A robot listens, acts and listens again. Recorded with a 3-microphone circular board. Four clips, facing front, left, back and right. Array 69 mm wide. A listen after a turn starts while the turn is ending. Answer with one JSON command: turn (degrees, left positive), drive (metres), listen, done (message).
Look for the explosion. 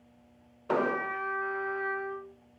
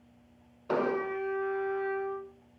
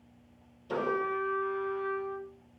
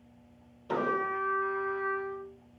{"turn": 30}
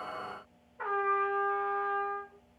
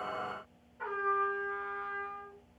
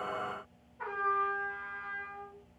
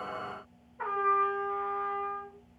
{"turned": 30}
{"done": "Facing where the explosion came from. I can't hear it now."}